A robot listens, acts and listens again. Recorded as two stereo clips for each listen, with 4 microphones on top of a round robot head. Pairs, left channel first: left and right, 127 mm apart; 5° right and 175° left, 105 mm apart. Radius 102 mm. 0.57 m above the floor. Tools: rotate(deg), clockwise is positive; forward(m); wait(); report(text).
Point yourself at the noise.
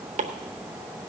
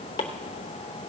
rotate(55)
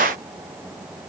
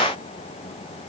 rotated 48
rotate(10)
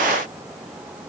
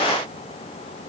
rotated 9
wait()
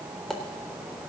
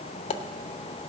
report("Found it: chopping, straight ahead, under 1 m away.")